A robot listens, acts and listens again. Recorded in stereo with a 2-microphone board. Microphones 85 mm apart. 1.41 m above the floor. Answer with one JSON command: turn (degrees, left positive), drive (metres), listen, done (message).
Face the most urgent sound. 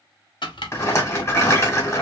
{"listen": true}
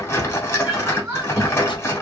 {"turn": -20}
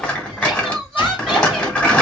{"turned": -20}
{"done": "Found it: crying, straight ahead, 1 to 2 m away."}